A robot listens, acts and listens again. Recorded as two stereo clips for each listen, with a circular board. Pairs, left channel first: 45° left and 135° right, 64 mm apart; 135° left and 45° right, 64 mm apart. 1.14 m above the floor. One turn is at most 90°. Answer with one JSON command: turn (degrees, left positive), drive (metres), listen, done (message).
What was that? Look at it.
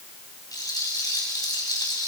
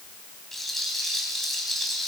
{"turn": 50}
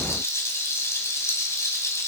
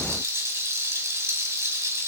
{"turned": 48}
{"done": "Facing the rattle."}